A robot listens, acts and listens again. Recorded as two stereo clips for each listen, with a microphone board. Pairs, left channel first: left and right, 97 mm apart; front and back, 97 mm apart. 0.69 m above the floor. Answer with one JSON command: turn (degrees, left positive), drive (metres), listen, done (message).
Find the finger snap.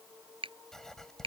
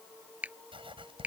{"turn": -105}
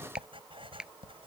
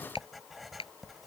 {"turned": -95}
{"turn": -10}
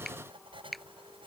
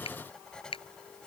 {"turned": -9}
{"done": "Facing the finger snap."}